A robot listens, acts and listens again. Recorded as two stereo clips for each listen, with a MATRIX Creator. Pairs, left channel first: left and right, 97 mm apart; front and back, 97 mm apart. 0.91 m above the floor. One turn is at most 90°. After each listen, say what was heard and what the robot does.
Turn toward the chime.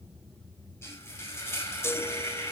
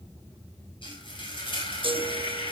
The chime: 155° left. Turn 90° left.
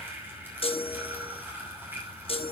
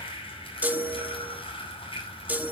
The chime is now 105° left. Turn 90° left.
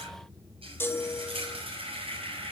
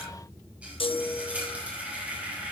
The chime is now 25° left. Turn 25° left.
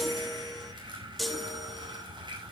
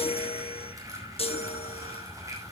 Facing the chime, 1 to 2 m away.